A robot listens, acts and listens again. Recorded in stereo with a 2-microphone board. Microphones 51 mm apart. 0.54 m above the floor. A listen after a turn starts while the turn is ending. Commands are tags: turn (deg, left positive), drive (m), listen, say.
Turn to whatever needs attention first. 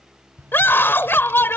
<turn deg="50"/>
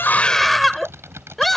<say>Facing the scream.</say>